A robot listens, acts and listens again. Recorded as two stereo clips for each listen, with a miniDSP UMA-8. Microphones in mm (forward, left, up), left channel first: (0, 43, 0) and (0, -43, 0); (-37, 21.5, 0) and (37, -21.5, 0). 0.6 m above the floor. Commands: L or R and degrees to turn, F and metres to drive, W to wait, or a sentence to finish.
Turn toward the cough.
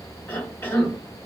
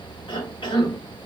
L150
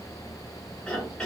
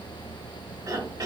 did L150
L10
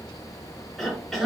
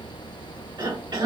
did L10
Facing the cough.